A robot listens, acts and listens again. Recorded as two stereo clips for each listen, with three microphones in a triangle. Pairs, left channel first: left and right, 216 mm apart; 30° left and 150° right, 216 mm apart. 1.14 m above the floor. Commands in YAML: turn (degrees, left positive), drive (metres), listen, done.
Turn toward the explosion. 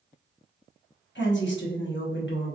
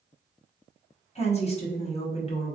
listen: true
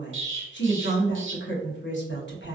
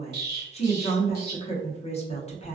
turn: -115
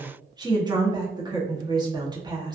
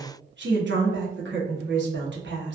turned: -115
done: "Facing where the explosion came from. I can't hear it now."